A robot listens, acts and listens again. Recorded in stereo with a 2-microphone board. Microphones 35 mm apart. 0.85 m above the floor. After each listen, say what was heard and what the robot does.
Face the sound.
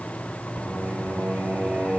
The singing: about 30° right or 150° right. Turn 30° right.
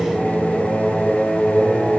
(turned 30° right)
So it is at 20° left. Turn 20° left.
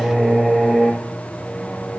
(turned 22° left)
Found it: singing, straight ahead, 2 to 4 m away.